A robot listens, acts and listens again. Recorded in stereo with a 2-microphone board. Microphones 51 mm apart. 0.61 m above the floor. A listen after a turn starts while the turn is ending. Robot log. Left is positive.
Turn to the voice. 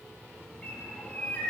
cmd idle
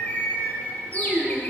note: The child speaking: about 15° right or 165° right.
cmd yaw -15
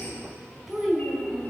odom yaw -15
end: Found it: a child speaking, straight ahead, 2 to 4 m away.